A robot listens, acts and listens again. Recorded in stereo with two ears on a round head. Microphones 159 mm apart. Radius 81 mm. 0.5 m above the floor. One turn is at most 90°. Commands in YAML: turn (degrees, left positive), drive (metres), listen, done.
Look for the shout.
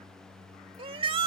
turn: -30
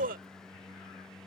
turn: -90
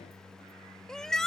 done: "Found it: a shout, straight ahead."